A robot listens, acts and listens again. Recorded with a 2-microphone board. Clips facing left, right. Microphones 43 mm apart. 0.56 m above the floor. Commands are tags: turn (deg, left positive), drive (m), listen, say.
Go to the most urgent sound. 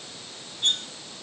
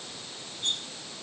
<listen/>
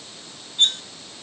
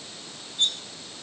<listen/>
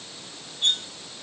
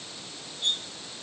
<say>I can't make out anything urgent to turn to.</say>